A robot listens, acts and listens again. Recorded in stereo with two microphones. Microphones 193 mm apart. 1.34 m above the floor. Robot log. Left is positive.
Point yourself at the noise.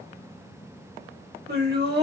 note: The laughter: about 60° right or 120° right.
cmd yaw -60
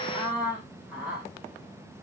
end: Found it: laughter, straight ahead, 2 to 4 m away.